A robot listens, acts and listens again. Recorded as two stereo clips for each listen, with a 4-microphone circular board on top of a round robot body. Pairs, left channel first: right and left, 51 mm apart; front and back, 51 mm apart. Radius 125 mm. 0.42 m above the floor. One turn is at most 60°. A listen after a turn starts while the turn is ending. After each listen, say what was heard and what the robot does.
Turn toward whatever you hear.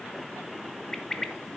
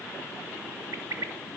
The bird: 165° right. Turn 60° right.
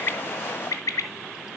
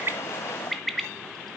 The bird is now 85° right. Turn 60° right.
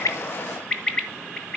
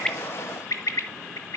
The bird is now 20° right. Turn 20° right.
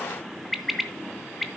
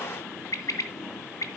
Found it: a bird, straight ahead.